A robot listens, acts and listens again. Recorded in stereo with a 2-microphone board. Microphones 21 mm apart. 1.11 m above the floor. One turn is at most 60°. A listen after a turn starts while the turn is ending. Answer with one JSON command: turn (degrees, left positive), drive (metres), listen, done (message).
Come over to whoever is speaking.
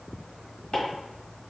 {"listen": true}
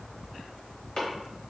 {"listen": true}
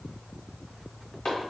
{"done": "I can't make out anyone speaking to turn to."}